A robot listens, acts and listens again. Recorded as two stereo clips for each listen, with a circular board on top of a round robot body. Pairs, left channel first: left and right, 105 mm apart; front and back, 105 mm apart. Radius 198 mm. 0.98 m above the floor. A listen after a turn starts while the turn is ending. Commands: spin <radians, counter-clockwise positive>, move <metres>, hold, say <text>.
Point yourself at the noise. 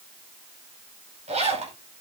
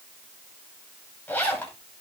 spin -1.31
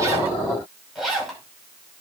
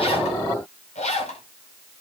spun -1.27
say Facing the zipper.